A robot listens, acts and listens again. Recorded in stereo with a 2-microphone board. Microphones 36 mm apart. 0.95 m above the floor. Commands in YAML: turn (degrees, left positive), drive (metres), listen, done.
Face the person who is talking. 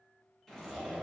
listen: true
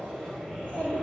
turn: 45
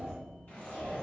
turn: 85
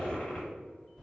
done: "Facing the child speaking."